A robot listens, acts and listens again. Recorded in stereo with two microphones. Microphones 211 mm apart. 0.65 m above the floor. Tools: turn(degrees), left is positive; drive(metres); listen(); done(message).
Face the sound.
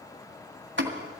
turn(degrees=-65)
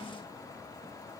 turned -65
listen()
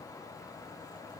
done("I heard a pop, but can't make it out now. It was about straight ahead or 50° right.")